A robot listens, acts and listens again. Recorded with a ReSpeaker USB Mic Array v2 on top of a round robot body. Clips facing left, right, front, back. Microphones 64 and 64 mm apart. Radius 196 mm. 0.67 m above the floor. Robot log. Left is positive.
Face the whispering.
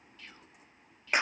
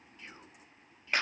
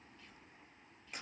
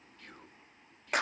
note: The whispering: 155° right.
cmd yaw -155
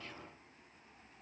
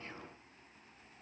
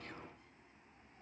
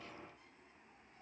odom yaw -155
cmd idle
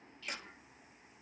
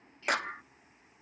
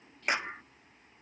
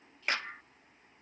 cmd idle
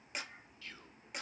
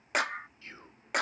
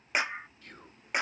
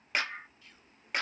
note: The whispering is now 30° right.
cmd yaw -30
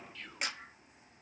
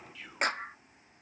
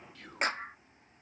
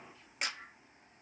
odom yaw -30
end: Found it: whispering, straight ahead.